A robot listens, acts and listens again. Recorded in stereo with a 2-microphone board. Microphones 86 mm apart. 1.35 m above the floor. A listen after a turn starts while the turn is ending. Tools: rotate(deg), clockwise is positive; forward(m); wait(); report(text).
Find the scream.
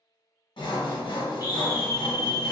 rotate(30)
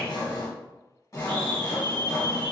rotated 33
rotate(115)
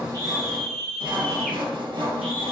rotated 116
report("Found it: a scream, straight ahead.")